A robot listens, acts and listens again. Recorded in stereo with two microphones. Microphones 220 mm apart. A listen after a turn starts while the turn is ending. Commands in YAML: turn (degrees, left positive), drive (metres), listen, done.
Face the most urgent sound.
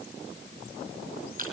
listen: true
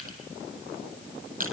listen: true
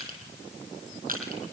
done: "I can't make out anything urgent, only crushing."